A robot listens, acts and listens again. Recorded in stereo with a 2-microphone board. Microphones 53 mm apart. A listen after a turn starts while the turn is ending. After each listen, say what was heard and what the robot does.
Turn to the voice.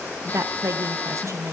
The woman speaking: about 70° right or 110° right. Turn 70° right.
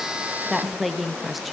Found it: a woman speaking, straight ahead, under 1 m away.